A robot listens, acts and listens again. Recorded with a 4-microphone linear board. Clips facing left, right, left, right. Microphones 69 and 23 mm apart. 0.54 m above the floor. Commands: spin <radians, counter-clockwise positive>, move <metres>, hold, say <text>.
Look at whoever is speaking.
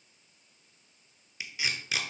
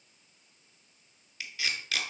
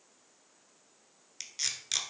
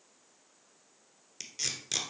hold
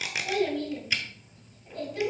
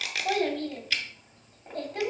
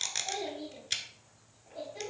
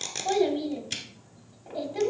spin -0.87
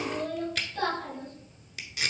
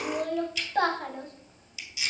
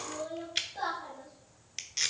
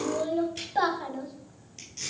spin -1.40
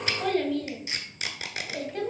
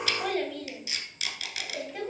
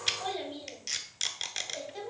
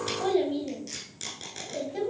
say Found it: a child speaking, straight ahead.